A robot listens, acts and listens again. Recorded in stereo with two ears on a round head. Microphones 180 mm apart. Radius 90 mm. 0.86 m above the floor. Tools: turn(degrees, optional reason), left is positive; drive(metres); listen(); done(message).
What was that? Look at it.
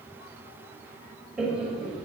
turn(degrees=-30)
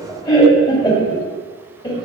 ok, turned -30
turn(degrees=20, reason="So it is at 20° left.")
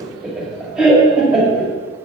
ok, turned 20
done("Facing the laughter.")